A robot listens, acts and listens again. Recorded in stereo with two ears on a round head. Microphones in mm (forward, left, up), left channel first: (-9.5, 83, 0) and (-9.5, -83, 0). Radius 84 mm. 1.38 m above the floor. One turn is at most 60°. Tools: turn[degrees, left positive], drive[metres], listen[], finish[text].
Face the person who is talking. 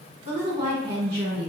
Thought: The woman speaking: about 30° right or 150° right.
Action: turn[-30]
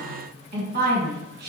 Thought: So it is at 120° right.
Action: turn[-60]
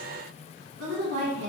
Thought: The woman speaking is now 50° right.
Action: turn[-50]
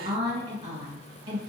Thought: The woman speaking is now 25° right.
Action: turn[-25]
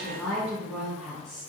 Action: finish[Found it: a woman speaking, straight ahead.]